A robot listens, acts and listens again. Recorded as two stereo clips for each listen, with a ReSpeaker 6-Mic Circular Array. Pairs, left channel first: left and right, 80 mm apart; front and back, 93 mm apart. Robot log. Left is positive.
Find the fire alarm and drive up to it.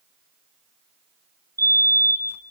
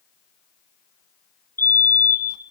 note: The fire alarm: 60° right.
cmd yaw -60
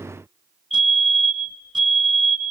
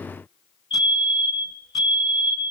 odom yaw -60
cmd fwd 1.0
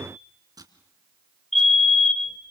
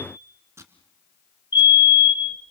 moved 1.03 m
cmd fwd 1.0
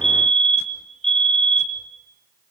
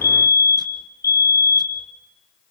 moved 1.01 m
note: The fire alarm is now 10° left.
cmd yaw +10
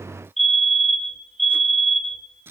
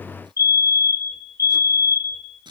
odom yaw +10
cmd fwd 1.0
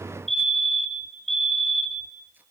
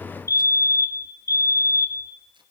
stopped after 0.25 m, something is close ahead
end: Arrived at the fire alarm, straight ahead.